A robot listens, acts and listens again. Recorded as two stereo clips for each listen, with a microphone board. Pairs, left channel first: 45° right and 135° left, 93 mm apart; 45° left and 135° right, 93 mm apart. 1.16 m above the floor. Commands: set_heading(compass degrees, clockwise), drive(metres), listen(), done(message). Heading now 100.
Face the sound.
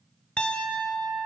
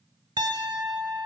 set_heading(220)
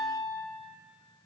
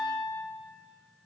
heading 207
set_heading(217)
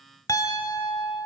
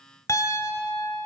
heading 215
done("Facing the piano, 1 to 2 m away.")